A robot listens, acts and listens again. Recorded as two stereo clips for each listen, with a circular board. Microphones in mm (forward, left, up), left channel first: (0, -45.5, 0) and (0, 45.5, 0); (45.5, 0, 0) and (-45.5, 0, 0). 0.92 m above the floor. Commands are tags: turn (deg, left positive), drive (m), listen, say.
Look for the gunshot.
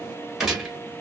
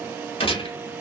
<say>Found it: a gunshot, straight ahead.</say>